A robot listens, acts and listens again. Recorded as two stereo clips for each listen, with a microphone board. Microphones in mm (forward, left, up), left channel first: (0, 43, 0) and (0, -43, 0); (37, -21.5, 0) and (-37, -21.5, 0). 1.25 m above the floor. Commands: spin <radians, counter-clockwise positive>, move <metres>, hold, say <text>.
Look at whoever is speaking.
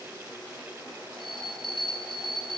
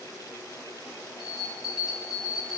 hold
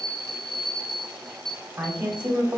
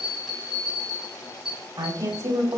spin -2.79
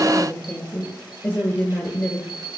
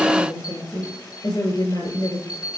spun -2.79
spin 0.26
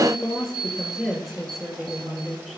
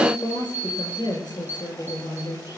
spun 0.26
say Facing the woman speaking, over 4 m away.